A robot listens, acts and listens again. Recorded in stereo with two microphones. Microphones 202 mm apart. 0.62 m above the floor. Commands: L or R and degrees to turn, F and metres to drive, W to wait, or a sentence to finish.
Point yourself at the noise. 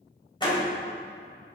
L25
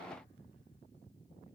W
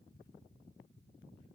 I heard a door slam, but can't make it out now. It was about straight ahead or 130° left.